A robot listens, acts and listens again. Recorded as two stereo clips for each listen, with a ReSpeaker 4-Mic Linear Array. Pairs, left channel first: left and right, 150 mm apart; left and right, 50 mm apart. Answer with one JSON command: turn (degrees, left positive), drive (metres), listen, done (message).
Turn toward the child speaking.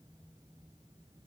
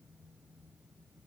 {"listen": true}
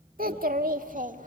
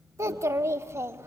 {"turn": -60}
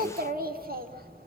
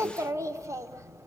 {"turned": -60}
{"turn": -85}
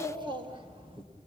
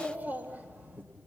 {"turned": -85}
{"turn": -35}
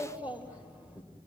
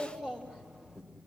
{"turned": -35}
{"turn": -10}
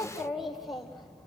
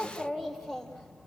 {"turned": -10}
{"done": "Found it: a child speaking, straight ahead."}